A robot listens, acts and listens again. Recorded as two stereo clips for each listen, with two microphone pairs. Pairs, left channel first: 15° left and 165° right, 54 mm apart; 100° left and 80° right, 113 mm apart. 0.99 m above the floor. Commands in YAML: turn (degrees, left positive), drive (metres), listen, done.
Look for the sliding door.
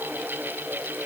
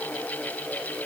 listen: true
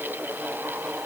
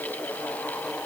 listen: true
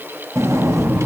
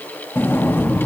turn: 170
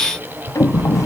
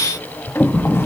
turn: 30
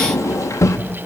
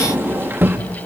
done: "Found it: a sliding door, straight ahead."